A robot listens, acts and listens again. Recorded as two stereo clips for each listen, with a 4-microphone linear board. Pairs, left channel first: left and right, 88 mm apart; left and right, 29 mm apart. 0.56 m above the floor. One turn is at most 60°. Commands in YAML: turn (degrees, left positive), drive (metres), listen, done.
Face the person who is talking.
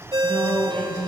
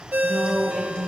turn: 30
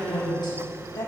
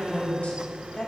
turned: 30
turn: 60
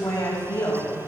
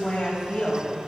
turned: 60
turn: 45
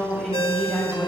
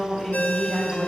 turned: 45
done: "Facing the woman speaking."